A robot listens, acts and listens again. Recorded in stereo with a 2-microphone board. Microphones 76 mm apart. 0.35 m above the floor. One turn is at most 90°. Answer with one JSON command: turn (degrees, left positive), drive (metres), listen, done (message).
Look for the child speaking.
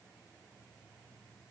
{"listen": true}
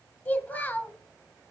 {"turn": 20}
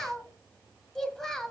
{"done": "Found it: a child speaking, straight ahead."}